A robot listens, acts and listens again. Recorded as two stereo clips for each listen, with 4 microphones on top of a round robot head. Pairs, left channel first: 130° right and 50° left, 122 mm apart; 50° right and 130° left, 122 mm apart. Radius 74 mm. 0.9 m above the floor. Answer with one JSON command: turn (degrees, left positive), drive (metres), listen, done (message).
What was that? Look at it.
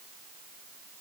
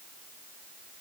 {"listen": true}
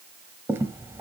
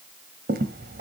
{"turn": 120}
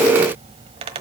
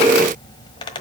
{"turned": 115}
{"done": "Found it: a squeak, straight ahead."}